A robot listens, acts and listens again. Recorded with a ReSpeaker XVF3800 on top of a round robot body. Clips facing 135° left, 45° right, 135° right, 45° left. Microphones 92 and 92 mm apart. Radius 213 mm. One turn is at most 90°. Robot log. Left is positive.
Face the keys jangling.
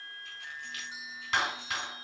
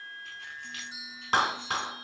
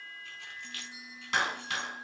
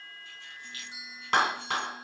note: The keys jangling: 135° right.
cmd yaw -90
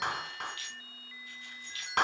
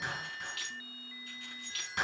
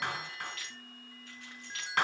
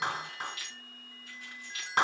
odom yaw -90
note: The keys jangling is now 40° right.
cmd yaw -40
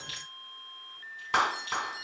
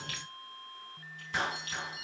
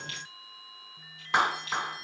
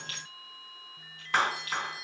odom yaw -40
end: Found it: keys jangling, straight ahead.